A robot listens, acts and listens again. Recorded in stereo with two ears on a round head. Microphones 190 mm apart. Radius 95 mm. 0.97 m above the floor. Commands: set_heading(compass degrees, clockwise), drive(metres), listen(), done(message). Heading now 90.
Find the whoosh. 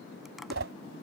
set_heading(160)
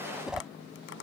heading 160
done("Found it: a whoosh, straight ahead.")